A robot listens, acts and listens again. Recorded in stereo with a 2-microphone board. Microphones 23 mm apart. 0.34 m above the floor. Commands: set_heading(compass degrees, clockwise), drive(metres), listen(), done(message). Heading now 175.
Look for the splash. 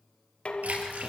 set_heading(265)
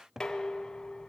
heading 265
done("I heard a splash from this way, but can't make it out now.")